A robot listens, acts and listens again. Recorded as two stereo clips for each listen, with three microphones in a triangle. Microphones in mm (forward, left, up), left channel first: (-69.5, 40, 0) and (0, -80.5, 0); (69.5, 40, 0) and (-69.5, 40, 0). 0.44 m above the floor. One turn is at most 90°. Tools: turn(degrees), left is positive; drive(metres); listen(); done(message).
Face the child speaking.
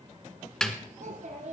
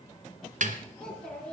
turn(degrees=-85)
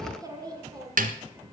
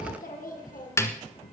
done("Facing the child speaking, 2 to 4 m away.")